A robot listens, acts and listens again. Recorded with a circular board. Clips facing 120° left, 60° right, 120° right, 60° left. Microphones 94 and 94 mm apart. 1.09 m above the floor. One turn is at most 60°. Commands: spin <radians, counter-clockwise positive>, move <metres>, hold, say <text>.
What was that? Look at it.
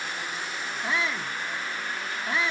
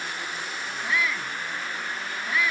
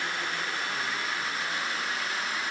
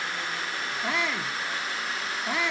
spin 0.96
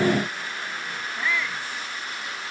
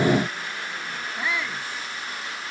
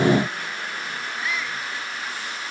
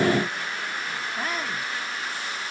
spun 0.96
spin 0.26
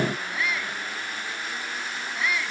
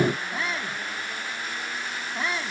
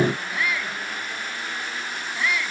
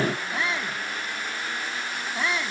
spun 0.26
say Facing the shout.